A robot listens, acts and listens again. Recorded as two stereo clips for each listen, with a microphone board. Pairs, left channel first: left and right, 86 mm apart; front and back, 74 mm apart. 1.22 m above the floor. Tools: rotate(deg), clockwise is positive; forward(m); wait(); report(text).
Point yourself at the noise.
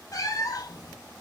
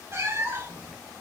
rotate(-125)
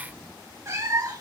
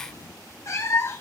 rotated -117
rotate(45)
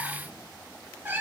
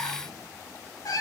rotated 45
rotate(25)
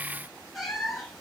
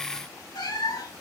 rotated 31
report("Found it: a cat meowing, straight ahead, 2 to 4 m away.")